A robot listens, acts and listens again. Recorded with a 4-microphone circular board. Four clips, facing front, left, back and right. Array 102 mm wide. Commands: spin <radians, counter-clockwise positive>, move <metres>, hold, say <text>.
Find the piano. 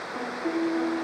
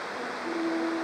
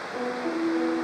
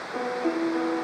spin -1.31
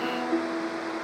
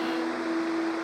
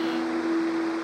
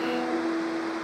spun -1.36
say Facing the piano.